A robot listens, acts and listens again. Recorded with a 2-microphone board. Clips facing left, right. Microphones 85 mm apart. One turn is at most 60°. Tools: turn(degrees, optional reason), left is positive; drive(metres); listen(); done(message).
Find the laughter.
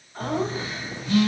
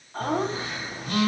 turn(degrees=-60)
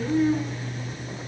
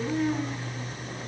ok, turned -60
turn(degrees=-20, reason="So it is at 20° right.")
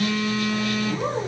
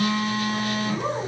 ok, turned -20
done("Facing the laughter.")